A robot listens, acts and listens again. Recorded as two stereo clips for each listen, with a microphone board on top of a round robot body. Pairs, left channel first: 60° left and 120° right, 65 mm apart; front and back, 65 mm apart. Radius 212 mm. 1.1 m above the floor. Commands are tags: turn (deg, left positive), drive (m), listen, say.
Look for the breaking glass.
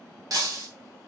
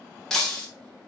<turn deg="-80"/>
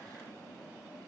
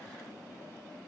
<say>Facing where the breaking glass came from. I can't hear it now.</say>